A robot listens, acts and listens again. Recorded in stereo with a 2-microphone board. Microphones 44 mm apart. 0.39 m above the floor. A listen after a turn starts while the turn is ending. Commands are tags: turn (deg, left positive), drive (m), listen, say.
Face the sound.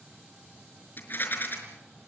<turn deg="50"/>
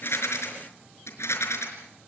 <turn deg="80"/>
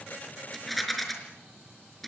<say>Found it: a rattle, straight ahead.</say>